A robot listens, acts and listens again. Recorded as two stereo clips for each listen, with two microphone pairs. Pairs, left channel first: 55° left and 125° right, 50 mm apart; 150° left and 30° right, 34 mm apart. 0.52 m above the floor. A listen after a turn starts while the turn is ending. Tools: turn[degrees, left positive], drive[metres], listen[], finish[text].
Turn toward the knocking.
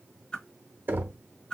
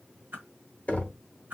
Thought: The knocking: 160° right.
Action: turn[-160]
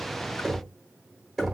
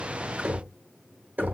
Thought: The knocking is now 40° right.
Action: turn[-40]
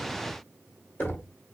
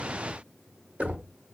Thought: The knocking is now 10° left.
Action: turn[10]
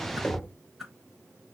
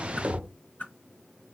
Action: finish[Facing the knocking, under 1 m away.]